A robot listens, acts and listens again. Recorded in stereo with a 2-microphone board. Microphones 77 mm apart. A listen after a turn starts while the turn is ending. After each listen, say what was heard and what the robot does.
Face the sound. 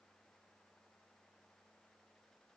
Keep listening.
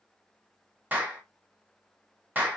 The clap: about 25° right or 155° right. Turn 25° right.
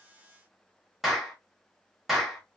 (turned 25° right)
Facing the clap, 1 to 2 m away.